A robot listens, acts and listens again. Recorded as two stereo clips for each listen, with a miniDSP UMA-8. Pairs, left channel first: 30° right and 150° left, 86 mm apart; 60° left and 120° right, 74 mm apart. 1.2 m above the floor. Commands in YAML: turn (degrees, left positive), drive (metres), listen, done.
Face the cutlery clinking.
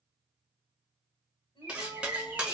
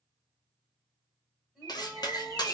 turn: 70
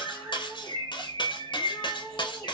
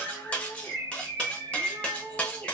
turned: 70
turn: -10
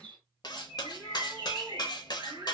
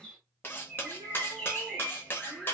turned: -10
done: "Found it: cutlery clinking, straight ahead."